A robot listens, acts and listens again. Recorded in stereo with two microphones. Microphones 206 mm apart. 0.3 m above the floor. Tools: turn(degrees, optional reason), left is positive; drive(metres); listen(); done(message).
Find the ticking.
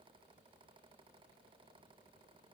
listen()
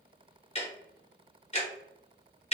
turn(degrees=35, reason="The ticking: about 35° left or 145° left.")
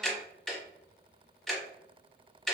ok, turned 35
done("Facing the ticking, under 1 m away.")